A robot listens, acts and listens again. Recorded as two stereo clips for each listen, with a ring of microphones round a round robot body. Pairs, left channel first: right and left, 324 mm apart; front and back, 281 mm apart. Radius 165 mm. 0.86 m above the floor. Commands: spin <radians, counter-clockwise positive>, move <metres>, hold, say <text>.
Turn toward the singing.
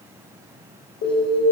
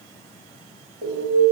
hold
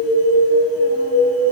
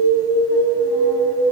hold
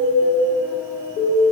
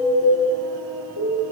say I can't make out singing to turn to.